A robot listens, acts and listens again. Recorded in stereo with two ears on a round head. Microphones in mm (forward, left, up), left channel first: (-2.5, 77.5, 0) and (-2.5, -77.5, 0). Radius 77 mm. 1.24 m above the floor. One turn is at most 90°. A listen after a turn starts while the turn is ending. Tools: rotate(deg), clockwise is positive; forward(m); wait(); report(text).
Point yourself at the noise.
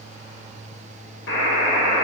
rotate(-70)
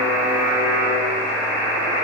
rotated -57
rotate(-40)
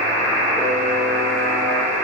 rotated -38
report("Found it: a buzzer, straight ahead, 1 to 2 m away.")